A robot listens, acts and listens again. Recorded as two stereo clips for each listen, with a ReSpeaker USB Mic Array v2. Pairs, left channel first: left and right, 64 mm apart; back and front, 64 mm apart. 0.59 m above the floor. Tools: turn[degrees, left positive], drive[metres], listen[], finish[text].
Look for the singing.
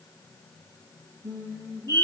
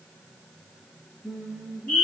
Thought: The singing: 70° right.
Action: turn[-70]
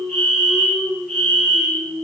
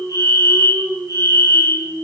Action: finish[Found it: singing, straight ahead.]